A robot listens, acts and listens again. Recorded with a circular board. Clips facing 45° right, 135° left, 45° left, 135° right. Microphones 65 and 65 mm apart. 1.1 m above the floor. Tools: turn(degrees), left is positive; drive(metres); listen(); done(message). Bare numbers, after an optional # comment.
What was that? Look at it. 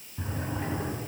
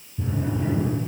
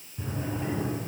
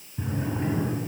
# The drawer: 70° right.
turn(-70)
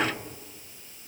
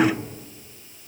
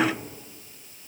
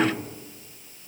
listen()
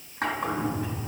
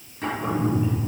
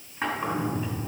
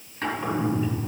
# The drawer is now 15° right.
turn(-15)
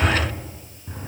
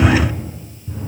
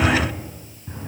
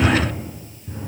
done("Facing the drawer.")